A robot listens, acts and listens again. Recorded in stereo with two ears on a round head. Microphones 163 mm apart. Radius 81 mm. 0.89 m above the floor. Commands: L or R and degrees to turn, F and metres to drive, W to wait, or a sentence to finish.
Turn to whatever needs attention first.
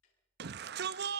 R60
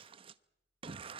R35
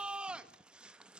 Found it: a shout, straight ahead, under 1 m away.